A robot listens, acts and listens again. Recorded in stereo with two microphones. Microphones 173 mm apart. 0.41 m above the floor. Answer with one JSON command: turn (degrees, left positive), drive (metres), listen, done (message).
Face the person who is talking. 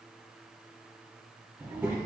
{"turn": -30}
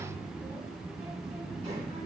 {"turn": -140}
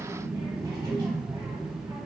{"turn": -30}
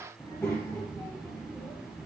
{"turn": 15}
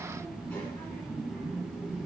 {"turn": 10}
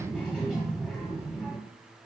{"done": "Found it: a child speaking, straight ahead."}